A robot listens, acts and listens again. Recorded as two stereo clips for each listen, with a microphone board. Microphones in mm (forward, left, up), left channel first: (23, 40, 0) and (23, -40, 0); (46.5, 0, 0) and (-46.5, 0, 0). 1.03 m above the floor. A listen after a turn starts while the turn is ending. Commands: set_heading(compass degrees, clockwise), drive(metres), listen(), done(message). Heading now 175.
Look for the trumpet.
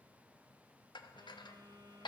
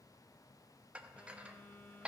listen()
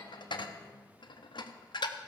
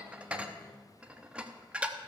listen()
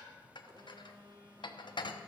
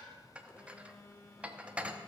done("I can't make out a trumpet, only a phone buzzing and dishes clattering.")